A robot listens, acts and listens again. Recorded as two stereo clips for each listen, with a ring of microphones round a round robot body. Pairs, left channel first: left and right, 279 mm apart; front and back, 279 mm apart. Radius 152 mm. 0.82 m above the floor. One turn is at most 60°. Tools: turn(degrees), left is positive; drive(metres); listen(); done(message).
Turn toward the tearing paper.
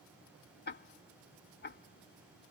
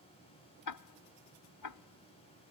listen()
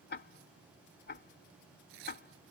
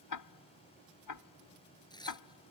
turn(degrees=-60)
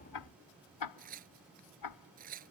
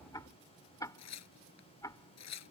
turn(degrees=-25)
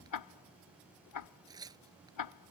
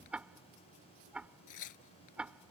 turn(degrees=-10)
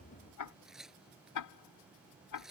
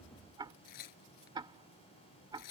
done("Found it: tearing paper, straight ahead.")